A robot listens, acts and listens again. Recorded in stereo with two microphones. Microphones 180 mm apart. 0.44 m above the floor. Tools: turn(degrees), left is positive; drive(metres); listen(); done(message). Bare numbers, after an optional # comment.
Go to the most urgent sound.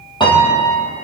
listen()
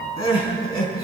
# The crying: about 30° left or 150° left.
turn(30)
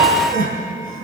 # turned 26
# So it is at 120° left.
turn(120)
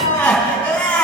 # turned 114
# The crying is now 10° left.
turn(10)
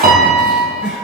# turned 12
drive(1.0)
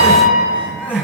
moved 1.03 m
# The crying is now 10° right.
turn(-10)
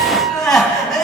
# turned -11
drive(1.0)
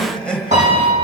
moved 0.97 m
drive(1.0)
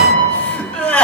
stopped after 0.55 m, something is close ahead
# The crying is now 10° left.
turn(10)
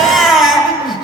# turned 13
done("Arrived at the crying, straight ahead.")